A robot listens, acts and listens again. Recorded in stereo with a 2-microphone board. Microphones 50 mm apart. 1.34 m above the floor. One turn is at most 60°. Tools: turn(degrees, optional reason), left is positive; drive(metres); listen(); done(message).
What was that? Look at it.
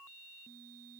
listen()
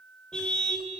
turn(degrees=15, reason="The car horn: about 15° left or 165° left.")
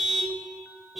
done("Facing the car horn.")